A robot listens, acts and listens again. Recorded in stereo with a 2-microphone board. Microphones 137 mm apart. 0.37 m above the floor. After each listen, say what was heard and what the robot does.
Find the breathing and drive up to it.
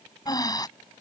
The breathing: about 30° left or 150° left. Turn 30° left.
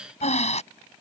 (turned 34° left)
So it is at 115° left. Turn 115° left.
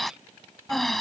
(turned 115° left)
Drive 1.0 m forward.
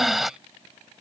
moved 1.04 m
Drive 1.0 m forward.
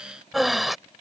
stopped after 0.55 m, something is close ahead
I am next to the breathing.